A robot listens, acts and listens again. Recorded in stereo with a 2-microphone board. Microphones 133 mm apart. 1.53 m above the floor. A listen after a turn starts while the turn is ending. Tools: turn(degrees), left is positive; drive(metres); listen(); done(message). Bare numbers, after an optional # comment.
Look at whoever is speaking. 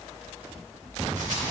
listen()
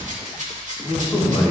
turn(30)
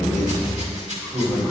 # So it is at 30° right.
turn(-30)
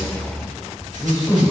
done("Found it: a man speaking, straight ahead, 2 to 4 m away.")